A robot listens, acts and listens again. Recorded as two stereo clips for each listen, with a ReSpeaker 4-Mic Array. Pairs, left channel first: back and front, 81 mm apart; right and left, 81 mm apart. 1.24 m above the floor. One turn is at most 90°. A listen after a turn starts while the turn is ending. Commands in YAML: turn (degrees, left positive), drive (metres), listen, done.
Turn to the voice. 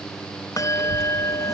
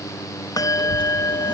turn: -90
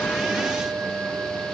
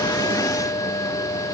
turn: -10
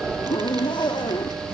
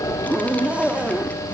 turn: -20
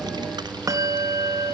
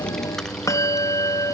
done: "Facing the child speaking."